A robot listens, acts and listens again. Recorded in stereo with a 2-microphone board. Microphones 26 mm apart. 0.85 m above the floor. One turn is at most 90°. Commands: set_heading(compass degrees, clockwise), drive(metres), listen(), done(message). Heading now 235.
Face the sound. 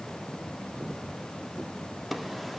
listen()
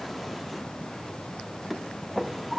set_heading(265)
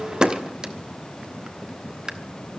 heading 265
set_heading(355)
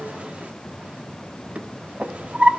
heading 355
set_heading(50)
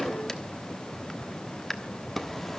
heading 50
set_heading(35)
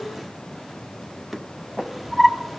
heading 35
done("Found it: a drawer, straight ahead, 1 to 2 m away.")